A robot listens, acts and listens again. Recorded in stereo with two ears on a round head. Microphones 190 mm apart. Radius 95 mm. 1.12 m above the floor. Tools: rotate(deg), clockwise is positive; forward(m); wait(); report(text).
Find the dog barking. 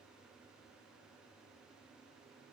wait()
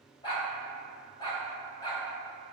rotate(-20)
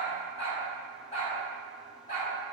rotate(-30)
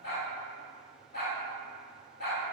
rotate(-120)
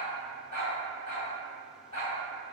rotate(-35)
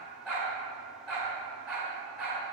report("Facing the dog barking.")